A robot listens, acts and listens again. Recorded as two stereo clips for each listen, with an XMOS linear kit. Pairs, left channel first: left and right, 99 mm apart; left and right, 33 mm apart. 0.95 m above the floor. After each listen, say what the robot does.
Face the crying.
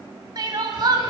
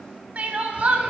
Turn 45° right.
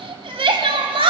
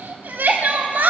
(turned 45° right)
Turn 85° right.
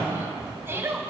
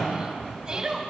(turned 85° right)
Turn 25° right.
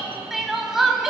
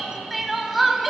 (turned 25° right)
Facing the crying.